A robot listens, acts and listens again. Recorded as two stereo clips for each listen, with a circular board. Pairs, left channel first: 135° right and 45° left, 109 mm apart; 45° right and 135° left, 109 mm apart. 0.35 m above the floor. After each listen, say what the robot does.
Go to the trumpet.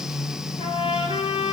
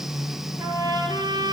Turn 170° right.
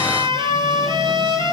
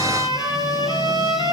Drive 1.0 m forward.
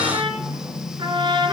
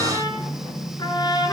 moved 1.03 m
Drive 1.0 m forward.
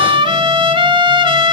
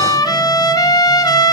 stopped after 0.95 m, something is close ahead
I am next to the trumpet.